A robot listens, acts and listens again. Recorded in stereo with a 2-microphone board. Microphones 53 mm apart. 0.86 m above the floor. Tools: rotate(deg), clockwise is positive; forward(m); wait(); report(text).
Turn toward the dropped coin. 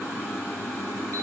wait()
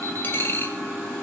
rotate(-40)
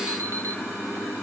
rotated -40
wait()
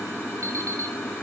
report("I heard a dropped coin, but can't make it out now. It was about straight ahead or 100° left.")